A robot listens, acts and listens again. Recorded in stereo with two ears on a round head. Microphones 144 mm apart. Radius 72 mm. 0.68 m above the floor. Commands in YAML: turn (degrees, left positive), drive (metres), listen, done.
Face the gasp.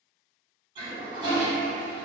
listen: true
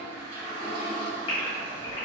turn: 35
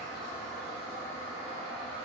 listen: true
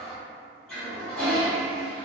done: "I heard a gasp, but can't make it out now. It was about straight ahead or 110° left."